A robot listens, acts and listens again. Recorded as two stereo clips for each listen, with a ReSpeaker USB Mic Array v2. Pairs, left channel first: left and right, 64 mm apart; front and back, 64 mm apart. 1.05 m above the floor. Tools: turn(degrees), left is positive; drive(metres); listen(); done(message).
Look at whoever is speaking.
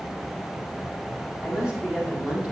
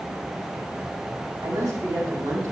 turn(degrees=-165)
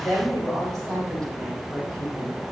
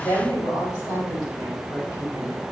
done("Facing the woman speaking, over 4 m away.")